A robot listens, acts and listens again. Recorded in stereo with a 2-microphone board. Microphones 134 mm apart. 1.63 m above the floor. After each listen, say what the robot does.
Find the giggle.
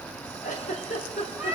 Turn 75° left.
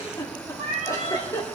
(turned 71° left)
Turn 25° left.
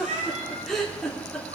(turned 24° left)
Facing the giggle.